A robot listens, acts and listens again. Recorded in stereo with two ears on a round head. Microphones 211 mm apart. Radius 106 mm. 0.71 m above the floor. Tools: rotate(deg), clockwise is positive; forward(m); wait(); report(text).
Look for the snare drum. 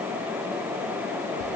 wait()
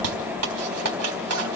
wait()
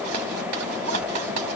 report("I can't make out a snare drum to turn to.")